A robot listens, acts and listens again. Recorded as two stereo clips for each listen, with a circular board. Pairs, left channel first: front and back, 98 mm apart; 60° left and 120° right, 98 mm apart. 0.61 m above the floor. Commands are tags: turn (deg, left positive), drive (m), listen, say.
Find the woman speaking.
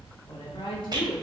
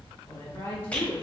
<turn deg="10"/>
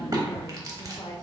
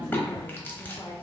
<turn deg="30"/>
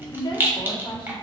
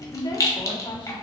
<turn deg="55"/>
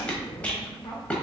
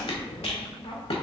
<turn deg="45"/>
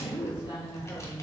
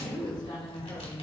<turn deg="35"/>
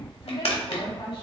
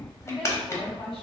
<turn deg="-20"/>
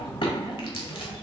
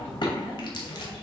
<say>Facing the woman speaking.</say>